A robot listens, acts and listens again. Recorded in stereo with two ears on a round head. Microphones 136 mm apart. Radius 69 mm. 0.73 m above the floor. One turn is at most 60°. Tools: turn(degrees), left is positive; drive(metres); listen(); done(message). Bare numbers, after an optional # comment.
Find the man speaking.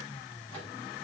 listen()
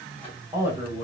# The man speaking: about 20° right or 160° right.
turn(-20)
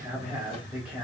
done("Found it: a man speaking, straight ahead, 2 to 4 m away.")